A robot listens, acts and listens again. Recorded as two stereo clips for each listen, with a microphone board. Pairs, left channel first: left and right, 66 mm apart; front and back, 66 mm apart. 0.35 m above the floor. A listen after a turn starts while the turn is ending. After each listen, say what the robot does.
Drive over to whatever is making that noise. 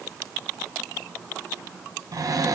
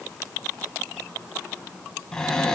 Turn 80° right.
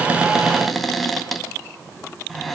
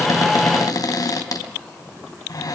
Drive 1.0 m forward.
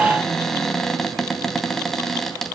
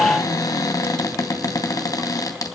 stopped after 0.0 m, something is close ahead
Blocked. The cupboard door is further on, straight ahead.